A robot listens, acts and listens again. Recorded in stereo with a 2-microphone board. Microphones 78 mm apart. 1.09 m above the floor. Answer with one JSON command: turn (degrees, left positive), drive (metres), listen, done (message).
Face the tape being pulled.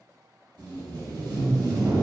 {"turn": -65}
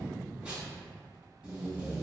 {"turn": -20}
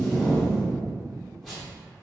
{"done": "Found it: tape being pulled, straight ahead, 1 to 2 m away."}